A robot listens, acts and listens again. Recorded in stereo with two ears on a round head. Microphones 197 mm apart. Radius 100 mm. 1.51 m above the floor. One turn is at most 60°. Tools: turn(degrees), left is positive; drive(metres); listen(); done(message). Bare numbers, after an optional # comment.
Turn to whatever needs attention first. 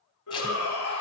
turn(60)
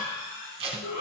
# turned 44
# So it is at 55° left.
turn(55)
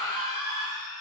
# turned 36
# The shout is now 20° left.
turn(20)
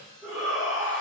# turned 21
done("Facing the shout.")